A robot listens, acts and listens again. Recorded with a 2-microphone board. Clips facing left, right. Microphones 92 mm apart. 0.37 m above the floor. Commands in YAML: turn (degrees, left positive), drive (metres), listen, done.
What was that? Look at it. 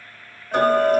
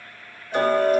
turn: 50
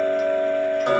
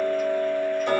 turn: 75
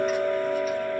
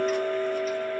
turn: 10
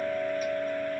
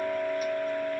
done: "Facing the ticking."